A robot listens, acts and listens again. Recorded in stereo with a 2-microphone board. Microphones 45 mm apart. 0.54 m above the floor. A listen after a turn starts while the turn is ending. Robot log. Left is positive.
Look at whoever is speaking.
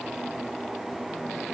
cmd idle
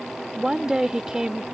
note: The woman speaking: about 15° right or 165° right.
cmd yaw -15
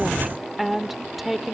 end: Facing the woman speaking.